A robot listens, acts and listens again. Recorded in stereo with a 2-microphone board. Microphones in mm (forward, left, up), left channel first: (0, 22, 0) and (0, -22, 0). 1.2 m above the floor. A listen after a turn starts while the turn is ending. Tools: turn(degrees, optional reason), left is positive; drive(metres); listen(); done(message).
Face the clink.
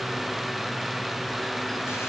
listen()
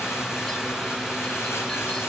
listen()
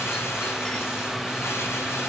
done("I can't make out a clink to turn to.")